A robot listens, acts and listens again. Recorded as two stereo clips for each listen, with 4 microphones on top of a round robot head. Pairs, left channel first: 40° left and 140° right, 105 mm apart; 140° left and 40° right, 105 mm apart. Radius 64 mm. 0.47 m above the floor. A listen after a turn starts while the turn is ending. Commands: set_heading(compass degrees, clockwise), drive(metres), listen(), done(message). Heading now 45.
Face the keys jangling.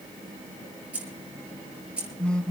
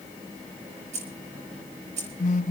set_heading(100)
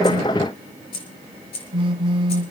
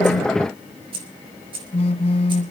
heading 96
done("Found it: keys jangling, straight ahead, over 4 m away.")